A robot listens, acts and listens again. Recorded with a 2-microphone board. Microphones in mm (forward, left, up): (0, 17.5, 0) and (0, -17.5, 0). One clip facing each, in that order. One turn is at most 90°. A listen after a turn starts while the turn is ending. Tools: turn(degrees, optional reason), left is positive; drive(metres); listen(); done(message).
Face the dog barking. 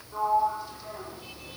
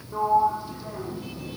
listen()
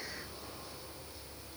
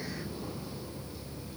listen()
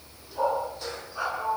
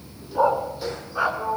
turn(degrees=-25, reason="The dog barking: about 25° right or 155° right.")
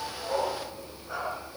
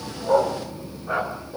turn(degrees=-40, reason="The dog barking: about 40° right or 140° right.")
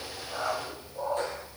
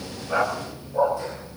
turn(degrees=-90, reason="So it is at 105° right.")
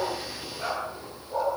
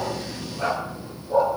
turn(degrees=-20, reason="The dog barking is now 20° right.")
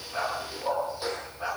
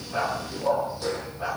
done("Found it: a dog barking, straight ahead.")